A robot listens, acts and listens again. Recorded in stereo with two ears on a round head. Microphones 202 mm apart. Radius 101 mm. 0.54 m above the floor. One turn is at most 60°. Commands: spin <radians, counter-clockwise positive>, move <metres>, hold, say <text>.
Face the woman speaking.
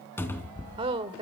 spin -0.44
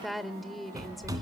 say Found it: a woman speaking, straight ahead.